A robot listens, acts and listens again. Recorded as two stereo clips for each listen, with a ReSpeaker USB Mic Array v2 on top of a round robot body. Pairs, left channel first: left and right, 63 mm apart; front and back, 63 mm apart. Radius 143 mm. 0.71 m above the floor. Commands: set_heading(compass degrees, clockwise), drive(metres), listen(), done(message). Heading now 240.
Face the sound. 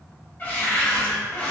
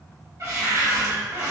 set_heading(95)
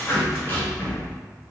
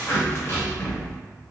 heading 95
set_heading(55)
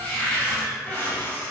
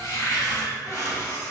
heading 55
set_heading(30)
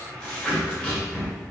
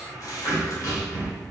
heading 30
set_heading(15)
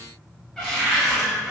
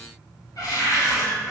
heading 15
set_heading(5)
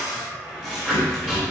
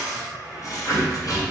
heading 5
done("Facing the cupboard door, 1 to 2 m away.")